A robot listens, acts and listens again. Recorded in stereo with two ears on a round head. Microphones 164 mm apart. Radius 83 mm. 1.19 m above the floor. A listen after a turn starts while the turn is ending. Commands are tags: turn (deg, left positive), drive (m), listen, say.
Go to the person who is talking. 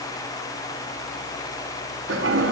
<listen/>
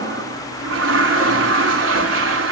<listen/>
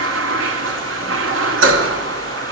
<say>I can't make out anyone speaking, only a toilet flushing.</say>